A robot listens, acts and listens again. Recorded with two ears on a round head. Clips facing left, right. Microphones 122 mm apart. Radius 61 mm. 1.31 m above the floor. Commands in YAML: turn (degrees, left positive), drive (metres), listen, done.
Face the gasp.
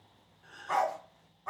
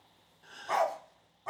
turn: -45
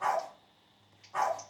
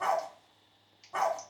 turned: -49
listen: true
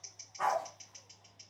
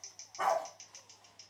done: "I heard a gasp, but can't make it out now. It was about 5° left or 90° right."